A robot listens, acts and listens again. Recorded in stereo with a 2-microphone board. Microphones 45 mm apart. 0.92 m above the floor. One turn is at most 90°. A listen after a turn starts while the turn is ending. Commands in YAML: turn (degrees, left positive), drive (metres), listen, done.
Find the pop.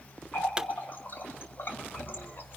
turn: -20
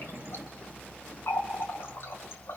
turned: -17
listen: true
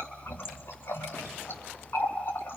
done: "I heard a pop, but can't make it out now. It was about straight ahead or 145° right."